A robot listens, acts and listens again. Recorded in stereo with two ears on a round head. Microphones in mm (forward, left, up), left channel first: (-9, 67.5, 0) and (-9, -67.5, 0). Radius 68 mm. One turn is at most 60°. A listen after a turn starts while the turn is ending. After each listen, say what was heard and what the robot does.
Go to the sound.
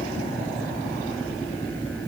Keep listening.
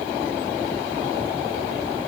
Keep listening.
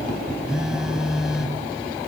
Turn 30° right.
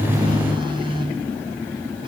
So it is at 145° right. Turn 60° right.
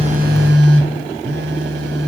The phone buzzing is now 80° right. Turn 60° right.
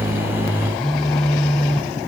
Drive 1.0 m forward.
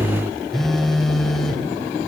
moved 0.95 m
Drive 1.0 m forward.
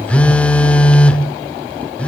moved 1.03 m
The phone buzzing is now 10° left. Turn 10° left.
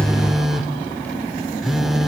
Drive 1.0 m forward.
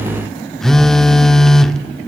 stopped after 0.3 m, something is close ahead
I am next to the phone buzzing.